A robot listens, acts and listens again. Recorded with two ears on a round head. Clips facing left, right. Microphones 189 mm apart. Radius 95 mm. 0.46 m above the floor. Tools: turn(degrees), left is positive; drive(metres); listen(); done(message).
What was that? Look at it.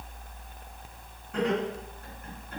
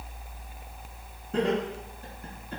turn(degrees=-30)
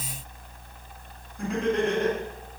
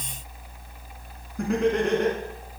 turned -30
turn(degrees=-120)
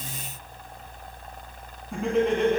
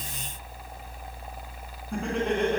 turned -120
done("Facing the laughter.")